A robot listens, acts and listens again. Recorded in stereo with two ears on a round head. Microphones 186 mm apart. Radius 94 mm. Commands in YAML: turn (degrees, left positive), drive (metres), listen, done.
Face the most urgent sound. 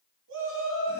turn: -65
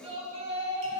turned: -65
turn: -30
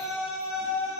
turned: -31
done: "Found it: a shout, straight ahead, 2 to 4 m away."